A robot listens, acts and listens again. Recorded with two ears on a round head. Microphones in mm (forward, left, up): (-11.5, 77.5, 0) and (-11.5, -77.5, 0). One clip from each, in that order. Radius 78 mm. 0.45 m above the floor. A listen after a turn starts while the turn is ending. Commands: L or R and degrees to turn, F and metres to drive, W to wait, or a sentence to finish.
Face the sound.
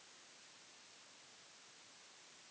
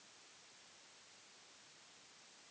W
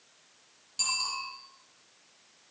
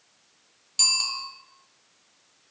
R60
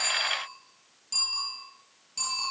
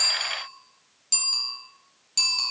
R60
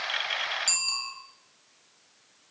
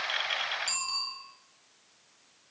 L25
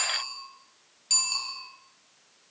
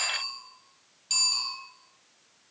Found it: a bicycle bell, straight ahead.